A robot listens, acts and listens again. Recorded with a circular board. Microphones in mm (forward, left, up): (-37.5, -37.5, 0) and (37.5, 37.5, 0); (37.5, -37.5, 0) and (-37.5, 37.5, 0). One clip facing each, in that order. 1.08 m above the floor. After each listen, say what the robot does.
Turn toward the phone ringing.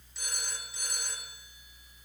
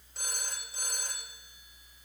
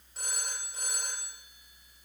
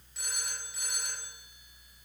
Facing the phone ringing.